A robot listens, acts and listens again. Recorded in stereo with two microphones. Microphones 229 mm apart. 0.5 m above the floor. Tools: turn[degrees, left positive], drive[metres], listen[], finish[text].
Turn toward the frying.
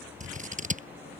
Action: listen[]
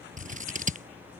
Action: listen[]
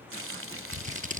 Thought: The frying: about 75° right or 105° right.
Action: turn[-75]
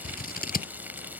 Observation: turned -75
Thought: So it is at 10° right.
Action: turn[-10]
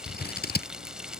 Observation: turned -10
Action: finish[Facing the frying.]